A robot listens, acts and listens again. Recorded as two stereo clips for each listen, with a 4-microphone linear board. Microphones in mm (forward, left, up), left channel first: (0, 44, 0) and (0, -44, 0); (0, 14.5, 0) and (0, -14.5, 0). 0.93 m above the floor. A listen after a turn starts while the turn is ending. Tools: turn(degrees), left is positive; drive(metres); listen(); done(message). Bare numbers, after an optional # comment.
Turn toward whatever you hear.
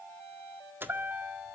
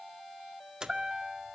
# The chime: about 25° right or 155° right.
turn(-25)
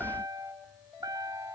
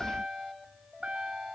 # So it is at 135° right.
turn(-135)
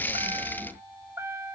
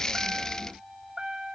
# The chime is now 30° right.
turn(-30)
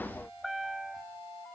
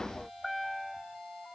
done("Facing the chime, 1 to 2 m away.")